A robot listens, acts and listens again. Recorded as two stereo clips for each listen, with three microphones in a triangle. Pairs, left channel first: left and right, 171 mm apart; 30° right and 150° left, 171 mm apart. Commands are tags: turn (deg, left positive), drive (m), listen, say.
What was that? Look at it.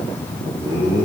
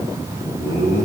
<turn deg="-25"/>
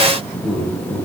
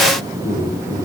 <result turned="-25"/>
<turn deg="-15"/>
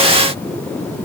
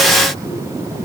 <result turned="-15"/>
<listen/>
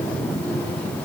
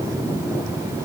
<listen/>
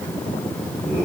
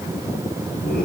<turn deg="-10"/>
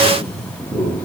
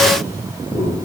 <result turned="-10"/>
<say>Facing the laughter, over 4 m away.</say>